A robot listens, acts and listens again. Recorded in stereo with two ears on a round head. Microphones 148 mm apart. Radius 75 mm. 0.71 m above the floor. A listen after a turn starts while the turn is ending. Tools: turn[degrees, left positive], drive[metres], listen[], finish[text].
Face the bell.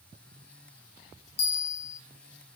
Thought: The bell: about 35° left or 145° left.
Action: turn[35]
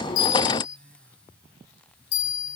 Thought: So it is at 105° left.
Action: turn[105]
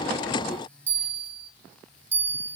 Thought: The bell is now 10° right.
Action: turn[-10]
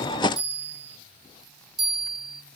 Action: finish[Found it: a bell, straight ahead.]